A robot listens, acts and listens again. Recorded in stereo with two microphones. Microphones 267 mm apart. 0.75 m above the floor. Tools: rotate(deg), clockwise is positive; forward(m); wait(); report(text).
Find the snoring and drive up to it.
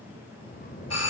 rotate(-35)
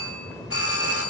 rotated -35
forward(1.0)
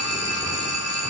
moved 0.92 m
wait()
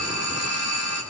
wait()
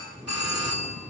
forward(1.0)
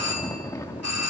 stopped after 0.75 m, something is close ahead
rotate(-15)
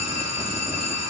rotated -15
wait()
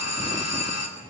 wait()
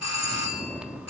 report("I am next to the snoring.")